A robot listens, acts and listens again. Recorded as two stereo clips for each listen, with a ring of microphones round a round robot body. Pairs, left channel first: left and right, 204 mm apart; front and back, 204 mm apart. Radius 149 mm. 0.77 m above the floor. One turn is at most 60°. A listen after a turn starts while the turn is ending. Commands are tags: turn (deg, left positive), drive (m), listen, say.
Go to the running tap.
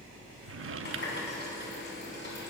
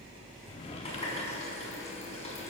<turn deg="60"/>
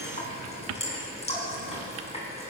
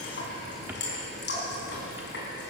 <turn deg="30"/>
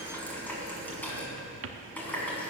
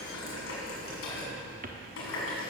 <turn deg="10"/>
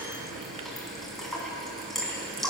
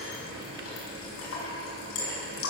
<drive m="1.0"/>
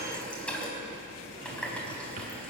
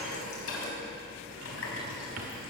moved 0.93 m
<drive m="1.0"/>
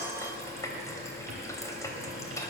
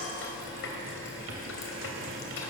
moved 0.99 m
<turn deg="15"/>
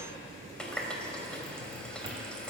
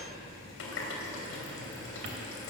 <drive m="1.0"/>
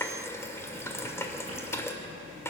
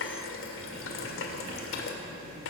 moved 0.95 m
<turn deg="10"/>
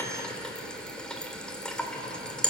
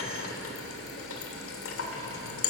<drive m="1.0"/>
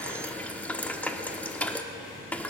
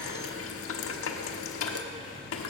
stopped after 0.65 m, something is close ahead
<say>I am next to the running tap.</say>